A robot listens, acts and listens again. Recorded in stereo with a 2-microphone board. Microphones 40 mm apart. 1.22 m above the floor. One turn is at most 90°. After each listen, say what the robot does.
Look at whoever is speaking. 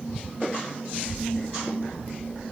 Turn 40° right.
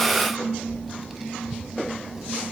Keep listening.
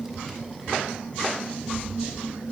Turn 15° right.
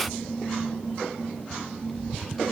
Keep listening.
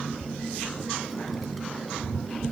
Facing the child speaking.